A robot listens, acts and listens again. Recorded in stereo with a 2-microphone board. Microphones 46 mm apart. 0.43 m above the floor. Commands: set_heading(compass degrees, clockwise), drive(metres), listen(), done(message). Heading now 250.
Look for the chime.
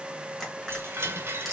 set_heading(315)
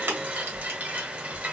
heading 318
set_heading(358)
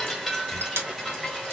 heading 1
done("Facing the chime.")